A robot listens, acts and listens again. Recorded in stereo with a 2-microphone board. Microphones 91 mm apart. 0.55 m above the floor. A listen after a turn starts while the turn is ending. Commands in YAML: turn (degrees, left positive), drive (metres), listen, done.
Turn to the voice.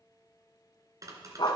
listen: true
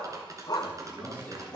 turn: 20
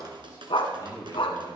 turn: 140
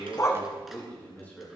turn: 20
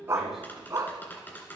listen: true
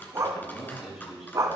done: "Facing the man speaking, over 4 m away."